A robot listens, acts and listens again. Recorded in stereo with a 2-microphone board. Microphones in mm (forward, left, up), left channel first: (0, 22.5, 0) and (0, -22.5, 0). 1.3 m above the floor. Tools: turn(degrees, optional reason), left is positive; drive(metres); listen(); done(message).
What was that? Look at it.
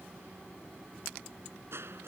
turn(degrees=-65, reason="The crushing: about 65° right or 115° right.")
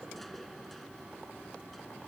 listen()
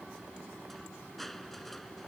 done("Facing the crushing.")